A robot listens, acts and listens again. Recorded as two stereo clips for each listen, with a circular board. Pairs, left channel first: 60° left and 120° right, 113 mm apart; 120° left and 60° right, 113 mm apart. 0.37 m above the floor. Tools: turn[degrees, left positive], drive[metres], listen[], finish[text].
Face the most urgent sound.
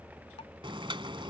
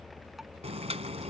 Action: listen[]
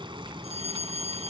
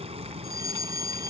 Thought: The fire alarm: 115° right.
Action: turn[-115]
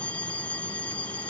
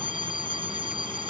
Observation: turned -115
Thought: The fire alarm is now 20° right.
Action: turn[-20]
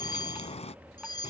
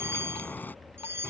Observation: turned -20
Thought: The fire alarm is now 10° left.
Action: turn[10]
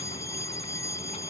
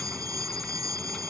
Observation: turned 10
Action: finish[Found it: a fire alarm, straight ahead.]